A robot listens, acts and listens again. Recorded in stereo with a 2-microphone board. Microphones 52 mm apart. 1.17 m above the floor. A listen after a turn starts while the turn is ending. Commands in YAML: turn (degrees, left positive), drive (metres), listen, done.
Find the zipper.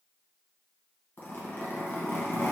turn: 40
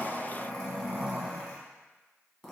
done: "Facing the zipper, under 1 m away."